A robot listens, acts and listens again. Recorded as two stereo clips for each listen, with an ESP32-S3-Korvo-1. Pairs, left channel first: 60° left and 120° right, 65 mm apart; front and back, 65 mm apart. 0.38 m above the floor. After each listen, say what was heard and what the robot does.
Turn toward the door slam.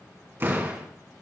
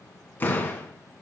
The door slam: 65° right. Turn 65° right.
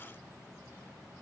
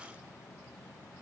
Facing where the door slam came from. I can't hear it now.